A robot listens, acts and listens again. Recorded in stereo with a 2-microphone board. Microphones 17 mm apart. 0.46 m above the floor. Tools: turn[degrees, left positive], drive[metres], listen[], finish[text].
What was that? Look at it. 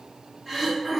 Thought: The throat clearing: about 20° right or 160° right.
Action: turn[-20]
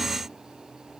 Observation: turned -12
Action: listen[]
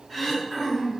Thought: So it is at 10° right.
Action: turn[-10]
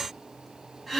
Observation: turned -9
Action: finish[Found it: throat clearing, straight ahead, 1 to 2 m away.]